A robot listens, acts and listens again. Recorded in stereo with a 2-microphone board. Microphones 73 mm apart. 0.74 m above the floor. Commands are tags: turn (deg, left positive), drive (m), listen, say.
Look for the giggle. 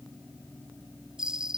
<listen/>
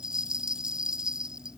<listen/>
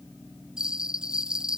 <say>I can't make out a giggle, only a bell.</say>